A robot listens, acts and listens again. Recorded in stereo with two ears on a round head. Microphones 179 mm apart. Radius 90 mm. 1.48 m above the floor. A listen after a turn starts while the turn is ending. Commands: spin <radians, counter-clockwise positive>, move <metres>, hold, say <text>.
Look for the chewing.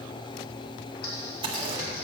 spin -0.44
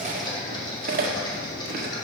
spin -2.18
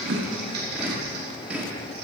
say Facing the chewing.